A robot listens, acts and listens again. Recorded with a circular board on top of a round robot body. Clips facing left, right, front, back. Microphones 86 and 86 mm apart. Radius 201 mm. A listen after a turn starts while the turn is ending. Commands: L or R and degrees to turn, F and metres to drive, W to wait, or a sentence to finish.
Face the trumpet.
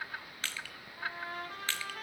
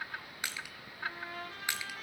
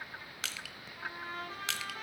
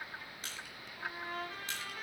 L60
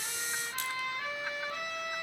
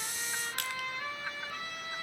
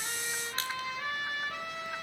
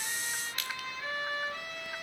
L15
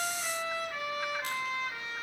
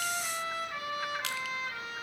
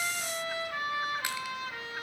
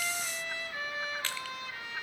Found it: a trumpet, straight ahead, over 4 m away.